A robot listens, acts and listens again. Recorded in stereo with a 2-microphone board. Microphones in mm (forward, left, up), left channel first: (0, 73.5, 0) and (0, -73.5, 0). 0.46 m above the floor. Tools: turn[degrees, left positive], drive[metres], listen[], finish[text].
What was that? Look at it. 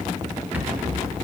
Action: turn[-30]
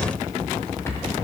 Thought: So it is at 20° left.
Action: turn[20]
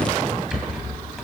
Action: finish[Facing the rattle, 2 to 4 m away.]